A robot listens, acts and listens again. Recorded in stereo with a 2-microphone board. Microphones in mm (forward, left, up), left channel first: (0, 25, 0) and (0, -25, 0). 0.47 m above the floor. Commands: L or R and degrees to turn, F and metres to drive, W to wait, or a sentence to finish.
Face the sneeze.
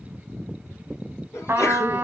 L60
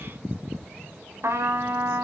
W
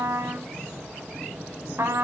I heard a sneeze, but can't make it out now. It was about straight ahead or 60° left.